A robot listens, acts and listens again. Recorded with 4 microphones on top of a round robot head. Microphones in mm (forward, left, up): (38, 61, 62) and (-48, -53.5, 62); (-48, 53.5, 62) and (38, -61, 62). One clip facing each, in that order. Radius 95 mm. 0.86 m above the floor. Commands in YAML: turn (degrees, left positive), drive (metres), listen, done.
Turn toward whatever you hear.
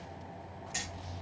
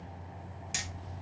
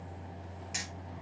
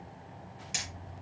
turn: -115
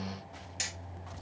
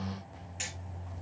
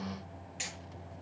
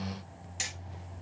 done: "Found it: hammering, straight ahead."